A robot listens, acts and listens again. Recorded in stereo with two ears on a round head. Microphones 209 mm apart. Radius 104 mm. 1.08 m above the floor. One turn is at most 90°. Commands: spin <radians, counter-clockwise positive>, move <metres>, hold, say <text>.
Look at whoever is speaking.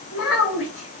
spin 1.05
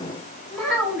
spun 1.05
say Facing the child speaking, 1 to 2 m away.